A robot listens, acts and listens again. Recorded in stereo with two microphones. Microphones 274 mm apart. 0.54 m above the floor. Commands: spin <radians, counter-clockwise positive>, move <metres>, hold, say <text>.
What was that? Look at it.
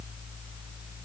hold
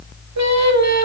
spin -1.57
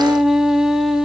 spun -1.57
say Found it: singing, straight ahead.